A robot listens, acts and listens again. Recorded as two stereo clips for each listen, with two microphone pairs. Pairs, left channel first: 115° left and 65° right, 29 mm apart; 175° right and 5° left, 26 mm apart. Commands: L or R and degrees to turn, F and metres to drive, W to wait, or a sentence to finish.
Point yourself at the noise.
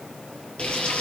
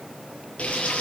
L160
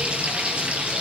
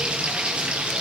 R30
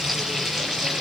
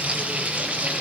Facing the frying, over 4 m away.